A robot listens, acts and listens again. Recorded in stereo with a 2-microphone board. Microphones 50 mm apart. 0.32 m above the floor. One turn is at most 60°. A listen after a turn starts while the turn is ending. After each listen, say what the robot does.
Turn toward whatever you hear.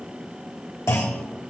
Turn 60° left.
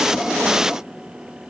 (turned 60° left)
Turn 30° left.
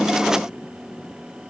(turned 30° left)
Facing where the clunk came from. I can't hear it now.